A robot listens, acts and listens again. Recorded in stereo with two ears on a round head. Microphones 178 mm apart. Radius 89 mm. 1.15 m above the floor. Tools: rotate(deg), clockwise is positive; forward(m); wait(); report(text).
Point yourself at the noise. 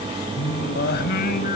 rotate(-45)
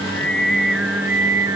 rotate(15)
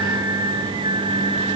rotate(30)
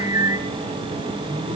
rotate(20)
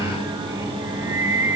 rotate(15)
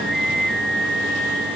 report("Found it: singing, straight ahead, 1 to 2 m away.")